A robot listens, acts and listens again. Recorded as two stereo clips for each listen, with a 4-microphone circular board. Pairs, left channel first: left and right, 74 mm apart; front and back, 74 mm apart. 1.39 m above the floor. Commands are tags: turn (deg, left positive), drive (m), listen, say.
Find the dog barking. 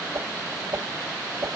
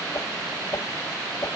<listen/>
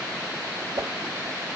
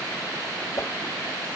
<listen/>
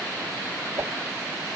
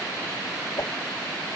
<say>I can't make out a dog barking to turn to.</say>